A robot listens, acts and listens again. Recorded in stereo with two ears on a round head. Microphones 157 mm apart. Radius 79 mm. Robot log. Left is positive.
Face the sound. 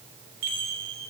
note: The chime: about 65° right or 115° right.
cmd yaw -65
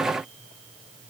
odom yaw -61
cmd idle
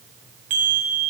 note: So it is at 50° right.
cmd yaw -50
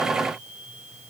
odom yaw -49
cmd idle
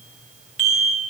end: Facing the chime, under 1 m away.